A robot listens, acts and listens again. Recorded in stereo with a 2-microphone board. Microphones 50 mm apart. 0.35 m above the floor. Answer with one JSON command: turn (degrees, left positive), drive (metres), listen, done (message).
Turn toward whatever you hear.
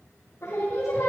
{"turn": 60}
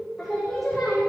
{"done": "Facing the singing."}